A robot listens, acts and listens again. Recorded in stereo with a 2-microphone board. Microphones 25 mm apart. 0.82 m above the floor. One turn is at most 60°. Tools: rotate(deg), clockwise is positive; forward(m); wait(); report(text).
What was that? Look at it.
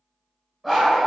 rotate(30)
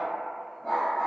rotate(-25)
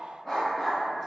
rotate(-10)
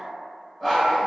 report("Found it: a dog barking, straight ahead.")